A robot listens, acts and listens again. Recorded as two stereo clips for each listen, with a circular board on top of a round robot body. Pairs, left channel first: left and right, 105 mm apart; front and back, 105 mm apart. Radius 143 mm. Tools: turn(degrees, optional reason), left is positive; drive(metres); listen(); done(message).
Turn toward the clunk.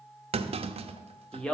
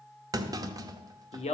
turn(degrees=-120, reason="The clunk: 120° right.")
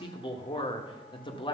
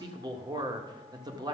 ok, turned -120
done("Facing where the clunk came from. I can't hear it now.")